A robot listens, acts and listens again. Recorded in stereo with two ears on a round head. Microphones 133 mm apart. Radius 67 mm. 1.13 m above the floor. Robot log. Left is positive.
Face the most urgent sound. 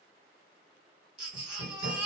cmd yaw -30
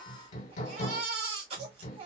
note: So it is at 135° right.
cmd yaw -135
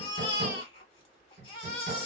note: The baby crying is now 35° left.
cmd yaw +35
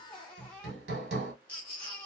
note: The baby crying is now 10° left.
cmd yaw +10
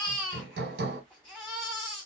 end: Found it: a baby crying, straight ahead.